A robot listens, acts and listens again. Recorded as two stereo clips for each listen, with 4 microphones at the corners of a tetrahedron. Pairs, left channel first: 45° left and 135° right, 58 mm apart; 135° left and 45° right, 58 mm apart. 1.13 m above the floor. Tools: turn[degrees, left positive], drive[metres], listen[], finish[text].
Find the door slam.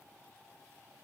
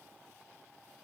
Action: listen[]
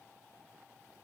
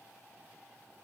Action: listen[]
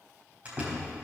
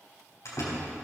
Thought: The door slam: 160° left.
Action: turn[160]
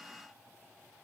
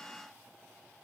Action: finish[I heard a door slam from this way, but can't make it out now.]